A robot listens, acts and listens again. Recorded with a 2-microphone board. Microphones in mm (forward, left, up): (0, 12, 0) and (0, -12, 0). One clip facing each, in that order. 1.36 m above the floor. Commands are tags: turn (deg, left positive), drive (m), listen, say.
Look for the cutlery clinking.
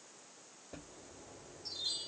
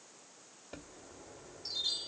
<listen/>
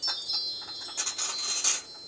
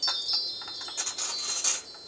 <turn deg="30"/>
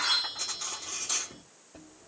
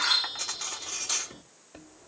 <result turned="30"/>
<turn deg="-20"/>
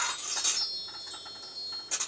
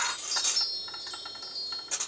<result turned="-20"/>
<say>Found it: cutlery clinking, straight ahead.</say>